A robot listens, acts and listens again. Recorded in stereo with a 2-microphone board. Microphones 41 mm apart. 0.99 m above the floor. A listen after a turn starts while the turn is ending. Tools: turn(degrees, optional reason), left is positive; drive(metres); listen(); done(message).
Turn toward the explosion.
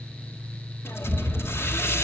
turn(degrees=40, reason="The explosion: about 40° left or 140° left.")
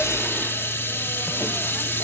listen()
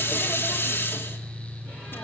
done("I heard an explosion, but can't make it out now. It was about straight ahead or 100° left.")